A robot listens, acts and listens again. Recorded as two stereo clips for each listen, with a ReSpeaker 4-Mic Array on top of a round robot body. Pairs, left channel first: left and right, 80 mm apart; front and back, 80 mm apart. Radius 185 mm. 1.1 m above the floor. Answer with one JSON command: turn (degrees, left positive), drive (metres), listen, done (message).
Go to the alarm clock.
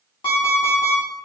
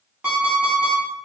{"turn": 100}
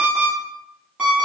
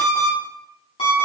{"turn": -15}
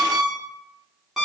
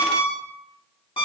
{"drive": 1.0}
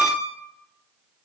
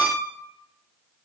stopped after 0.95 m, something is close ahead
{"done": "I am next to the alarm clock."}